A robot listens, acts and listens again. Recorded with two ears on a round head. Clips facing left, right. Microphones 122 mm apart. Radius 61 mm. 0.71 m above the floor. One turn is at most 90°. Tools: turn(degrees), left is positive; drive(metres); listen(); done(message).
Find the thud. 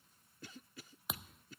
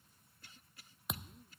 turn(degrees=30)
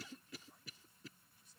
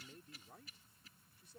listen()
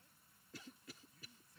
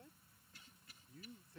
done("I heard a thud, but can't make it out now. It was about 30° right or 150° left.")